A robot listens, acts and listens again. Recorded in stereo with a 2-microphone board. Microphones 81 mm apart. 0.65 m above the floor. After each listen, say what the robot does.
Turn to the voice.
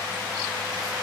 Keep listening.
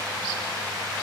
Keep listening.
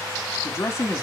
Turn 35° left.
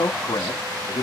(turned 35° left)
Turn 110° left.
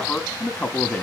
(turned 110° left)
Turn 20° left.
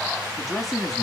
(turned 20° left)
Facing the man speaking.